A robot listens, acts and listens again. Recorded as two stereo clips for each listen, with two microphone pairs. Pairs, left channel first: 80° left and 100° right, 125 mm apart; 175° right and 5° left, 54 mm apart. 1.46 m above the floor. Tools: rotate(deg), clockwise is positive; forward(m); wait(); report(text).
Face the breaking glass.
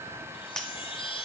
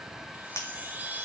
rotate(-165)
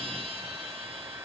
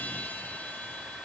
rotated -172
report("Facing where the breaking glass came from. I can't hear it now.")